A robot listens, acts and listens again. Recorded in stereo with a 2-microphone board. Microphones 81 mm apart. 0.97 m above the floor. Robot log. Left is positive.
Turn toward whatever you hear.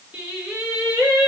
cmd yaw -30
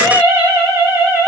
note: The singing: about 25° right or 155° right.
cmd yaw -25
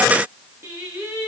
note: The singing: about 25° right or 155° right.
cmd yaw -25
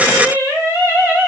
note: So it is at 155° right.
cmd yaw -155
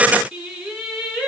end: Found it: singing, straight ahead, 1 to 2 m away.